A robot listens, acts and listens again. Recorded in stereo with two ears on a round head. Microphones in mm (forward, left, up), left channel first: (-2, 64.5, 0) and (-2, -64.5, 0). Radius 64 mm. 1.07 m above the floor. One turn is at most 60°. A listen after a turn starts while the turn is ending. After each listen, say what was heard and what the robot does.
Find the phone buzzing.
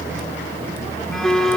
Turn 30° left.
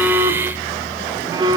So it is at 30° right. Turn 30° right.
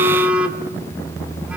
The phone buzzing is now 10° right. Turn 10° right.
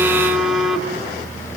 Found it: a phone buzzing, straight ahead, 2 to 4 m away.